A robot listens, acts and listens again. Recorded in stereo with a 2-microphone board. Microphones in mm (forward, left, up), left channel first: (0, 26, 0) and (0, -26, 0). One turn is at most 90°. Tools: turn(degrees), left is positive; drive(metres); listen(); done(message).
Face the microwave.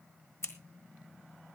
listen()
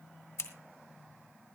listen()
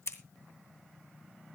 done("I can't make out a microwave, only scissors.")